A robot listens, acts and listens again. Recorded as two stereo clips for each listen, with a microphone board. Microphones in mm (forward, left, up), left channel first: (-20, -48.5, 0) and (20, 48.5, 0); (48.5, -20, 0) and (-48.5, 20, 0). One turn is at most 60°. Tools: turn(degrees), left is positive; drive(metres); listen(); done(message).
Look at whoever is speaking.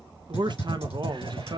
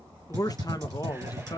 turn(degrees=25)
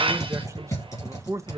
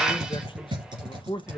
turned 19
turn(degrees=10)
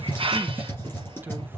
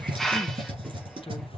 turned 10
listen()
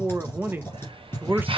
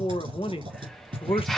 done("Facing the man speaking.")